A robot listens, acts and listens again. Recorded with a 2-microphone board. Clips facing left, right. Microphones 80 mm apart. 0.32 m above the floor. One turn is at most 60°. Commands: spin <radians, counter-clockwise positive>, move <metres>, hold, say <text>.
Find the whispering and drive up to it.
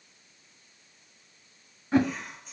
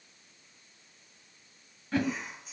spin -0.52
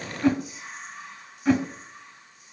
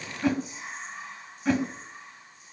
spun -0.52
spin -1.05
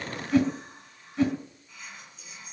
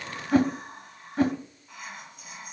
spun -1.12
spin -1.05
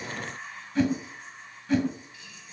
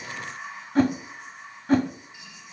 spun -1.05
spin -0.35
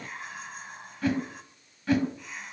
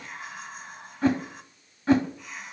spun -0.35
move 1.0
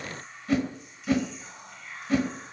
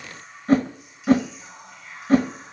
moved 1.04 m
move 1.0
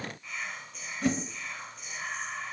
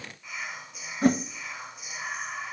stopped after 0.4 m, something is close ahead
spin -0.26
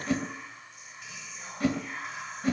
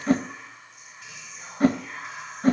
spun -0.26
say I am next to the whispering.